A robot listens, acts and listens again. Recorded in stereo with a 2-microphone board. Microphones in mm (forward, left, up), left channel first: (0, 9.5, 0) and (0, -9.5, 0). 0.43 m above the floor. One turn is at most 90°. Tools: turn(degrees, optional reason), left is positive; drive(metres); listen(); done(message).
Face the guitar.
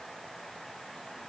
listen()
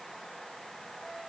listen()
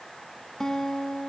turn(degrees=30, reason="The guitar: about 30° left or 150° left.")
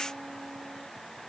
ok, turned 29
listen()
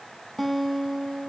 done("Facing the guitar, under 1 m away.")